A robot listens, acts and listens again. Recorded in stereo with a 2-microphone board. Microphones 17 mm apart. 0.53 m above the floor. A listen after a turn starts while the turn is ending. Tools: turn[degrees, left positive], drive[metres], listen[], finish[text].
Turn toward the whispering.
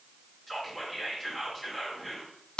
Action: turn[30]
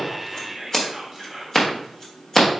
Thought: So it is at 15° right.
Action: turn[-15]
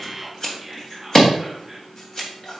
Action: finish[Found it: whispering, straight ahead, 1 to 2 m away.]